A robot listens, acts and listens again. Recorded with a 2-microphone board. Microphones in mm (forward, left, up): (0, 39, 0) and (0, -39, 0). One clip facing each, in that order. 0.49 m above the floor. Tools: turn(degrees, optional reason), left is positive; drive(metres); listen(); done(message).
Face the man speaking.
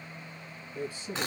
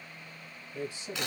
turn(degrees=-30)
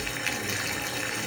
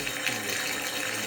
listen()
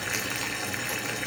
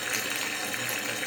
listen()
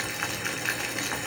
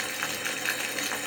done("I heard a man speaking, but can't make it out now. It was about 15° left or 135° right.")